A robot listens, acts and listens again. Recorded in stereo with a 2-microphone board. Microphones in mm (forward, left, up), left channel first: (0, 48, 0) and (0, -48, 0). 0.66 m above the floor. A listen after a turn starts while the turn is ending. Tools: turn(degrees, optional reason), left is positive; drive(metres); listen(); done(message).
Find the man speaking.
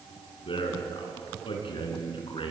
turn(degrees=65, reason="The man speaking: about 65° left or 115° left.")
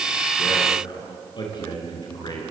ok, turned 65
turn(degrees=50, reason="So it is at 50° left.")
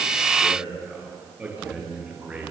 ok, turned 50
turn(degrees=-15, reason="The man speaking is now 15° right.")
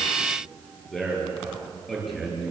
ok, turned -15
done("Found it: a man speaking, straight ahead.")